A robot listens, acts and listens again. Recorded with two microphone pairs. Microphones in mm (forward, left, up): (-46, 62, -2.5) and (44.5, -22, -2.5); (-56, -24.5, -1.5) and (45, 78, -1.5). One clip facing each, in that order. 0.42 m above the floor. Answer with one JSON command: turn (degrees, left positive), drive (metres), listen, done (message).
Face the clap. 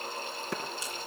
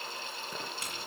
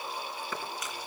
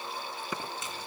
{"turn": 125}
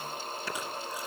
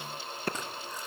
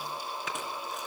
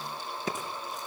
{"done": "Found it: a clap, straight ahead."}